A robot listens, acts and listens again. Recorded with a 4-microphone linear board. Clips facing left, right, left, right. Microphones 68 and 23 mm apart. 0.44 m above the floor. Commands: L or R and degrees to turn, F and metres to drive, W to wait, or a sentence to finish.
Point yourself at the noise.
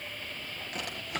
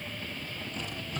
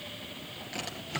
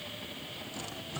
L90
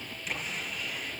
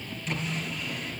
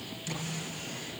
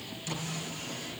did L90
Found it: a drawer, straight ahead, over 4 m away.